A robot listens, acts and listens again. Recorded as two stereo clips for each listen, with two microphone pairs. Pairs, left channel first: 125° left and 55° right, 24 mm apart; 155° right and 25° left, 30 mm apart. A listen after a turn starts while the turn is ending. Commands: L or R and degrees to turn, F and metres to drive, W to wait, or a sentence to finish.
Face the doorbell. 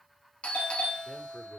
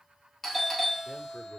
L120
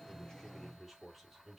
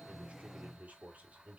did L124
W
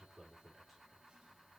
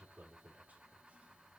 W
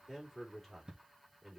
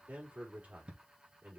Facing the doorbell, 2 to 4 m away.